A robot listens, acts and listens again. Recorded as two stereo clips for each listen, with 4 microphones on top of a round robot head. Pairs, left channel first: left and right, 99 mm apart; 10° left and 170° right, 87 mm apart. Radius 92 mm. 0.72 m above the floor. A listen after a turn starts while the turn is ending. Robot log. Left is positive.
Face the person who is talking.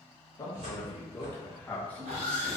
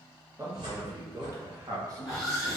note: The man speaking: 160° left.
cmd yaw +160
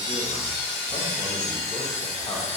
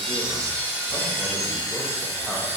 cmd idle
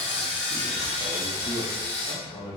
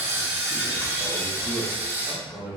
note: The man speaking is now 110° left.
cmd yaw +110
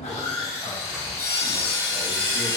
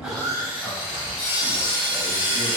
cmd idle
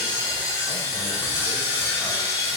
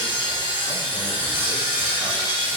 cmd idle
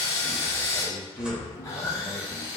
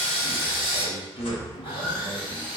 note: The man speaking is now 15° left.
cmd yaw +15
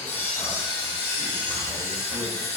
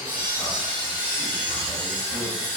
cmd idle
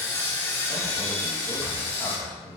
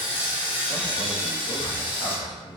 note: The man speaking is now 10° left.
cmd yaw +10
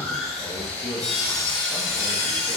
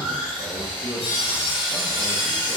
end: Found it: a man speaking, straight ahead.